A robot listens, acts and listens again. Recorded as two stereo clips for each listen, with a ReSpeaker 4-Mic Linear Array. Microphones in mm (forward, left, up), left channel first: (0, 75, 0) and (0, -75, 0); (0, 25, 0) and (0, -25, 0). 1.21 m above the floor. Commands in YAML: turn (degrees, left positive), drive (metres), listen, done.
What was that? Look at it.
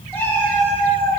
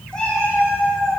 turn: 15
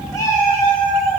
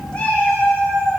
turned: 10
turn: 25
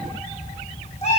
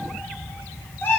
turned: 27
turn: 125
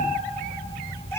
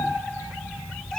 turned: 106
turn: 20
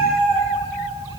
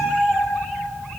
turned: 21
done: "Found it: a cat meowing, straight ahead, 1 to 2 m away."